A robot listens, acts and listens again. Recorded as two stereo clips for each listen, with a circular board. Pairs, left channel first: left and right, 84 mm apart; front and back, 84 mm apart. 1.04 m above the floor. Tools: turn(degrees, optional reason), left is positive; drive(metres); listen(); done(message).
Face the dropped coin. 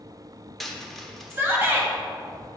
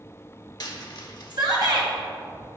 done("Facing the dropped coin, under 1 m away.")